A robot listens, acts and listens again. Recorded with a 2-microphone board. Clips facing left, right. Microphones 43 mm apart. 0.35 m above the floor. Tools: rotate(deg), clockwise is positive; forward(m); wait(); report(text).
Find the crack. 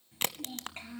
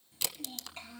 rotate(-45)
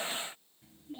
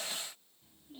wait()
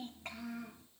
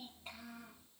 report("I heard a crack, but can't make it out now. It was about straight ahead or 90° left.")